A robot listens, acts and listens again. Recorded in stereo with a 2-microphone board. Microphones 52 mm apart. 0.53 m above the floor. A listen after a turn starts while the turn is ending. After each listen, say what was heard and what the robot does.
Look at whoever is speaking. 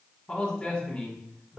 The man speaking: about 20° left or 160° left. Turn 20° left.
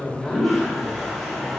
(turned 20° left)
Keep listening.
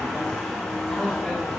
Keep listening.
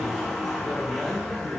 Found it: a man speaking, straight ahead.